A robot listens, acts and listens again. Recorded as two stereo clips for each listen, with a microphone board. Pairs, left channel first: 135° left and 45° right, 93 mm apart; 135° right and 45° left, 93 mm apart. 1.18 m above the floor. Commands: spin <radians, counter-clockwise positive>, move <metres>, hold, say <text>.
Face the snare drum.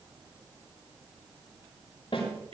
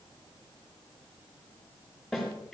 spin 2.36
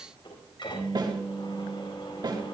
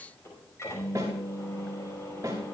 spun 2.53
spin -0.17
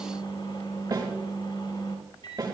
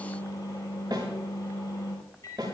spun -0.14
say Found it: a snare drum, straight ahead, over 4 m away.